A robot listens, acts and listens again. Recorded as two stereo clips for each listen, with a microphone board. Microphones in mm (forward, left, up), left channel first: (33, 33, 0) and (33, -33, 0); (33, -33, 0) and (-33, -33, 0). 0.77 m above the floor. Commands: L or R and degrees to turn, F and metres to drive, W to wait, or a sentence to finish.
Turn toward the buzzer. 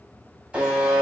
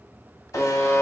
R20
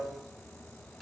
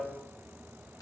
Found it: a buzzer, straight ahead.